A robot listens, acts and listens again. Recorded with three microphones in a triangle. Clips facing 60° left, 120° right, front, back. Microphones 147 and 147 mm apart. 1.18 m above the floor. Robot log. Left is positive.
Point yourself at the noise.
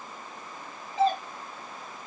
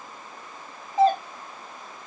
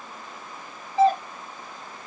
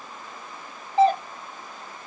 note: The doorbell: 160° right.
cmd yaw -160
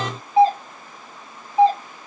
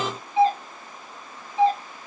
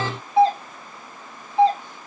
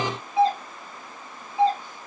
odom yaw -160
note: The doorbell is now 10° left.
cmd yaw +10
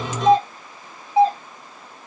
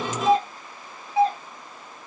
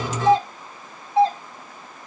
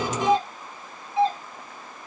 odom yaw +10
end: Found it: a doorbell, straight ahead.